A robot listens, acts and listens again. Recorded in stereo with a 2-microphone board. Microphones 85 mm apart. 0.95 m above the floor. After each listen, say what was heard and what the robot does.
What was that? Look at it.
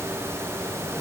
Keep listening.
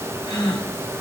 The gasp: about 60° left or 120° left. Turn 60° left.
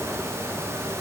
Keep listening.
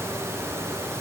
I heard a gasp, but can't make it out now. It was about straight ahead or 60° left.